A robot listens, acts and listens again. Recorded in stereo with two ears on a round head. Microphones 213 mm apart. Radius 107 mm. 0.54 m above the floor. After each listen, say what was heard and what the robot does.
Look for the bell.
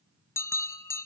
Turn 30° left.
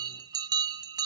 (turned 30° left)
So it is at 20° right. Turn 20° right.
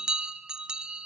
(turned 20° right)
Found it: a bell, straight ahead, under 1 m away.